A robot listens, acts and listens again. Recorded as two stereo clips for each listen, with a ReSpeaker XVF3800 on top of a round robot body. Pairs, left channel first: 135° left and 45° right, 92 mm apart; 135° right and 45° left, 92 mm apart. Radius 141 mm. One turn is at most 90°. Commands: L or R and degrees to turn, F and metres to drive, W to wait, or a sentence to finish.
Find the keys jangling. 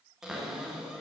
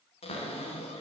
W
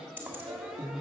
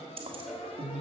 L15
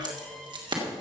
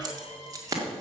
R10
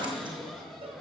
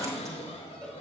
W
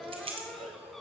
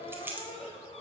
R25
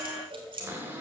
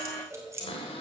R15
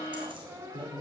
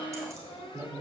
R15
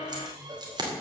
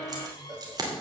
Found it: keys jangling, straight ahead.